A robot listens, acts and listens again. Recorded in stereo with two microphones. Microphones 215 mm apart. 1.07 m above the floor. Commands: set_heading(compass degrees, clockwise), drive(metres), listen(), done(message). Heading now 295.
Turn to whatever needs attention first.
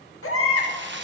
set_heading(205)
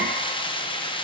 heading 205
listen()
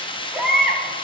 done("Found it: a baby crying, straight ahead.")